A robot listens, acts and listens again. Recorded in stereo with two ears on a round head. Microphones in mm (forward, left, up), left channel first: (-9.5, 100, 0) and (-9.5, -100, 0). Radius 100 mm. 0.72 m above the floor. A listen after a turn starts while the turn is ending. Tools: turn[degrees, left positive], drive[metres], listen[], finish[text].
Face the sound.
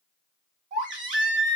Thought: The baby crying: about 35° right or 145° right.
Action: turn[-35]
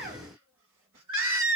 Thought: So it is at 110° right.
Action: turn[-110]
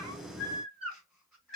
Action: finish[Facing the baby crying, 1 to 2 m away.]